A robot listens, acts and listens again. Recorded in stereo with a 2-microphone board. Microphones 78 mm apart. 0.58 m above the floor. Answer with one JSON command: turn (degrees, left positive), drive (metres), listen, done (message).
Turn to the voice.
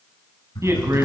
{"turn": -40}
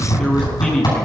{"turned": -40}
{"done": "Found it: a man speaking, straight ahead, over 4 m away."}